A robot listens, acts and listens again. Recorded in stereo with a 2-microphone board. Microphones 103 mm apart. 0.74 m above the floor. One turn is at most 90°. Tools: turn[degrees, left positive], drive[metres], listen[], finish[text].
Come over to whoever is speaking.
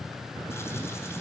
Action: listen[]
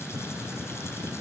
Action: listen[]
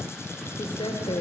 Thought: The woman speaking: about 60° left or 120° left.
Action: turn[60]
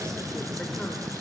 Action: listen[]
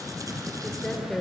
Action: drive[1.0]
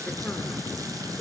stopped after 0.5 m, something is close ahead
Action: listen[]
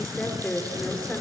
Thought: The woman speaking is now 15° left.
Action: turn[15]
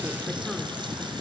Action: listen[]
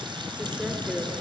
Action: finish[Blocked. The woman speaking is further on, straight ahead.]